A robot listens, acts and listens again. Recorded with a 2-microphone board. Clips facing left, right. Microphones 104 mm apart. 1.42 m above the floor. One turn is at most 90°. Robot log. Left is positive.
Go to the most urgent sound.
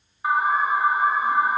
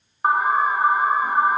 note: The alarm: about 45° right or 135° right.
cmd yaw -45
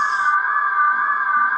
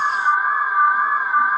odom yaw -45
cmd fwd 1.0
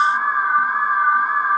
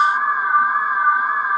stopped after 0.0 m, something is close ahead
end: Blocked. The alarm is further on, straight ahead.